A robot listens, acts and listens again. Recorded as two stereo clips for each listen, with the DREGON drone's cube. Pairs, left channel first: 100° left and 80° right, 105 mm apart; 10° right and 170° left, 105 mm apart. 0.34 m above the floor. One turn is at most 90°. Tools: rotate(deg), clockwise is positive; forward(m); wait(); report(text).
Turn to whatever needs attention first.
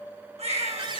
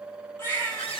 rotate(80)
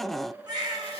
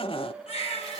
rotate(30)
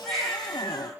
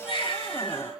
rotate(-15)
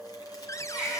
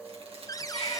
report("Facing the baby crying, over 4 m away.")